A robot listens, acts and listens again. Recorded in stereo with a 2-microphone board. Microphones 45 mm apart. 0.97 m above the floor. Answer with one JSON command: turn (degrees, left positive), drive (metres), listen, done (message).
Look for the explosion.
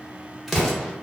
{"turn": 30}
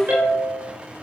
{"listen": true}
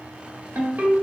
{"done": "I heard an explosion, but can't make it out now. It was about 30° right or 150° left."}